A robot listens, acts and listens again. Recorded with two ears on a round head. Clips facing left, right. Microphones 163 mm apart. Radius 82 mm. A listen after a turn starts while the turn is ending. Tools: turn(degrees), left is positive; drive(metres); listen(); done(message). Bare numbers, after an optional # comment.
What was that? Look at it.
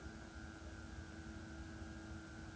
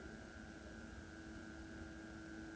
listen()
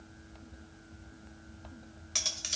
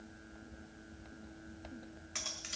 # The cutlery clinking: about 50° left or 130° left.
turn(50)
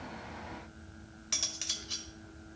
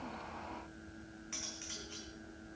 # So it is at 80° left.
turn(80)
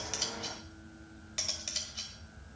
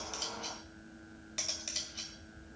done("Found it: cutlery clinking, straight ahead, 1 to 2 m away.")